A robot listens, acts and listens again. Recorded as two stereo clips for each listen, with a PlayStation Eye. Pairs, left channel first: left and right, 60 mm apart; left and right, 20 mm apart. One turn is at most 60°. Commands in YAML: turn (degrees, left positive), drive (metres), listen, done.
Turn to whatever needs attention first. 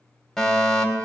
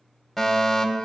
turn: 30
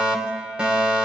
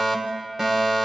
turn: -20
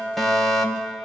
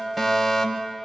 done: "Found it: a fire alarm, straight ahead."